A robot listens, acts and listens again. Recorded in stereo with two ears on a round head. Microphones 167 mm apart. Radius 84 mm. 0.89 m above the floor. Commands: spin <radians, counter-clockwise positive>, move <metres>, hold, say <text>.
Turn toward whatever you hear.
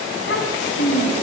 spin 1.05
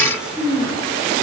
say Found it: a child speaking, straight ahead.